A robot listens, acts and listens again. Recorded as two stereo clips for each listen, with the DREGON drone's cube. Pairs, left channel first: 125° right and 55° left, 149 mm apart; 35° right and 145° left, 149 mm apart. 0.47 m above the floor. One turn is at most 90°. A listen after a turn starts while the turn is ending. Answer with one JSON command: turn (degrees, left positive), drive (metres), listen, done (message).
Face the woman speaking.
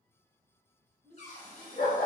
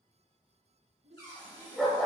{"turn": 90}
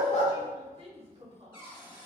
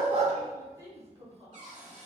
{"turn": 90}
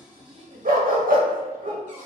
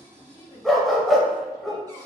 {"turn": 15}
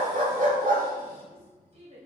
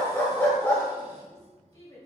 {"turn": 20}
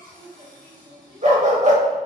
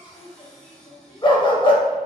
{"done": "Facing the woman speaking, 1 to 2 m away."}